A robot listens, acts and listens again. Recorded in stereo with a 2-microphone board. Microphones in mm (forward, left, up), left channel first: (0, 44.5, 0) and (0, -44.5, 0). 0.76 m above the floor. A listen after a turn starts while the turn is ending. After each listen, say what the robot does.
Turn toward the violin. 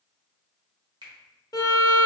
Turn 50° left.
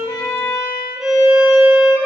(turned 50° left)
Facing the violin, under 1 m away.